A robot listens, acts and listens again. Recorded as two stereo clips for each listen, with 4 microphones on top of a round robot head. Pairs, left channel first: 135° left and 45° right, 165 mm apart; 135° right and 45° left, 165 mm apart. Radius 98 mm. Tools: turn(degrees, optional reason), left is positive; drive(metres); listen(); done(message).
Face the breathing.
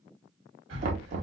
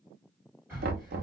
turn(degrees=-35, reason="The breathing: 35° right.")
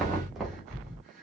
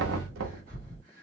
done("Facing the breathing, 2 to 4 m away.")